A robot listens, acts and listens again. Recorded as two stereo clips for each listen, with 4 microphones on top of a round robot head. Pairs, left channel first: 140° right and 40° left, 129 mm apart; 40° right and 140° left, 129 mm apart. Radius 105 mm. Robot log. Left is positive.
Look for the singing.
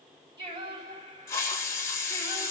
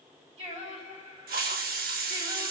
note: The singing: 100° left.
cmd yaw +100
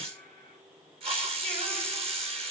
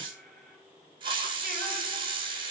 cmd idle
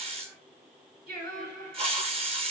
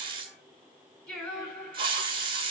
note: The singing is now 45° left.
cmd yaw +45
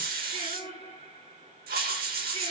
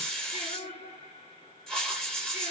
end: Facing the singing.